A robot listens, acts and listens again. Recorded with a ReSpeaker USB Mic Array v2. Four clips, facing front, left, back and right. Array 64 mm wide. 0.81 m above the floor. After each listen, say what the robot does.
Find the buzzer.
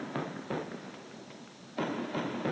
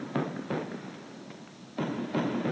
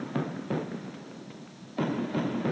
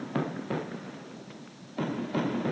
Keep listening.
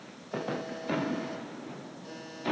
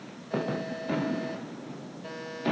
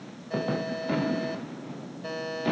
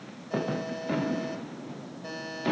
Turn 170° left.
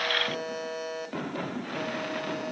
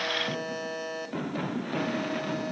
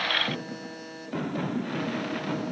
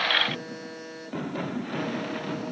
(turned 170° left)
Turn 25° left.
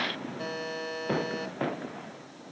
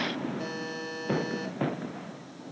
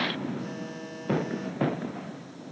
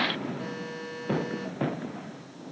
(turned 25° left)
Facing the buzzer, 2 to 4 m away.